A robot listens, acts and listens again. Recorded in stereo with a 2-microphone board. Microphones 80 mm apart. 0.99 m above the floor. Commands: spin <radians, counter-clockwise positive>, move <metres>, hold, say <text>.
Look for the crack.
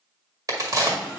spin -0.79
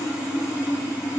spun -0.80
hold
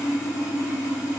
say I heard a crack, but can't make it out now. It was about 5° left or 90° right.